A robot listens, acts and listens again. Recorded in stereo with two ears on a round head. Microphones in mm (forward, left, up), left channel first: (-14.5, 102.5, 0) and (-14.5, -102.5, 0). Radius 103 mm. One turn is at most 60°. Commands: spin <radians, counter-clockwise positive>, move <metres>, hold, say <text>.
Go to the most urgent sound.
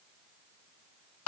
hold
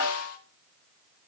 hold
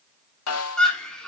spin 0.52
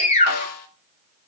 spin 1.05
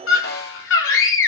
spin 1.05
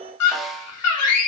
spin 1.05
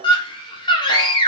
spin 0.35
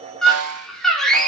move 1.0
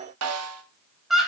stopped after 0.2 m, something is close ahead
say Blocked. The scream is further on, straight ahead.